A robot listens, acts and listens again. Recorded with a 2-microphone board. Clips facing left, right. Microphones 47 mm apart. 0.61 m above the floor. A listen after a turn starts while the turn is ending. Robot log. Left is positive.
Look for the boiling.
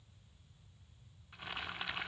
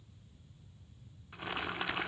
note: The boiling: about 15° right or 165° right.
cmd yaw -15
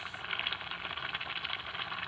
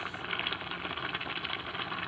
end: Facing the boiling, 1 to 2 m away.